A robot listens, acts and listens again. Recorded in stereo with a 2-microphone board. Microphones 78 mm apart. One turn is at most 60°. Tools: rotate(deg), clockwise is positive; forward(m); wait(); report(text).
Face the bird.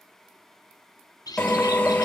rotate(-55)
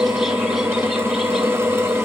wait()
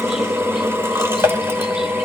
wait()
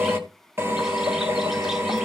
report("I heard a bird, but can't make it out now. It was about straight ahead or 70° left.")